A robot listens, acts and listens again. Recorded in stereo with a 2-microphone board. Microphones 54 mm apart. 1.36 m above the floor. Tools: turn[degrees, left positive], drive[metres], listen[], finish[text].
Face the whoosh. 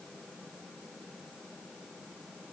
Action: listen[]
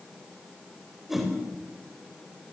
Action: turn[-30]
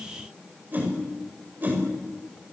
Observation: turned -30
Thought: So it is at 145° right.
Action: turn[-145]
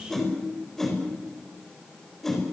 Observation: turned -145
Action: finish[Found it: a whoosh, straight ahead, over 4 m away.]